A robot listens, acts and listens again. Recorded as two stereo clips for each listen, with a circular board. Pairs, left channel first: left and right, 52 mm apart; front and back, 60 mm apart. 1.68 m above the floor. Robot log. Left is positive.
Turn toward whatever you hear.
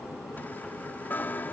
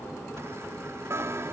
note: The chime: 140° left.
cmd yaw +140
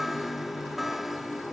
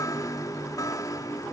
end: Facing the chime.